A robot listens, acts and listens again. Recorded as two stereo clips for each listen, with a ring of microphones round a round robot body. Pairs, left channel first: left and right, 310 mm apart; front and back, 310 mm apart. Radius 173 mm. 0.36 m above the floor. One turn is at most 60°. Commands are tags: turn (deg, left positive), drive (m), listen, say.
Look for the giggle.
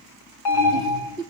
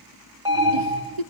<turn deg="-60"/>
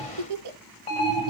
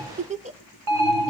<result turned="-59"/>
<turn deg="-60"/>
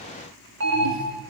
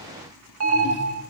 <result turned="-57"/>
<turn deg="-55"/>
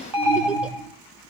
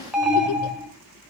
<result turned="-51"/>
<listen/>
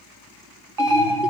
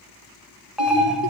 <say>Facing where the giggle came from. I can't hear it now.</say>